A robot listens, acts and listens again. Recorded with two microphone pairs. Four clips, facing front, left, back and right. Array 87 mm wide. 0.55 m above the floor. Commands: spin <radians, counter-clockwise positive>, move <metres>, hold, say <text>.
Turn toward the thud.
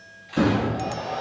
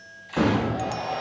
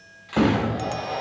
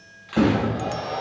spin -3.05
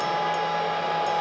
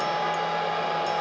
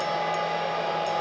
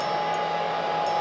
say Facing where the thud came from. I can't hear it now.